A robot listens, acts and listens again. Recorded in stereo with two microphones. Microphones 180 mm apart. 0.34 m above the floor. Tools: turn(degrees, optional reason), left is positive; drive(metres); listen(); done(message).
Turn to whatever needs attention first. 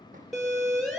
turn(degrees=30)
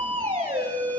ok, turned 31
turn(degrees=-30, reason="So it is at 30° right.")
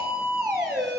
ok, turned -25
done("Facing the siren, over 4 m away.")